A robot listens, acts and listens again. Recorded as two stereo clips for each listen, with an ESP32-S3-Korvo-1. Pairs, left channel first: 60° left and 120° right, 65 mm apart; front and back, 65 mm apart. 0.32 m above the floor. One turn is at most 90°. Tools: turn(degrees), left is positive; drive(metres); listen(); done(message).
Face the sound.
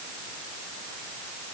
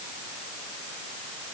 listen()
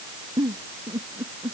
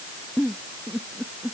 turn(degrees=-85)
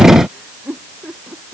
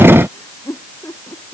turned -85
turn(degrees=-35)
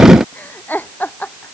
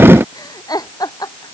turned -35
done("Found it: a giggle, straight ahead.")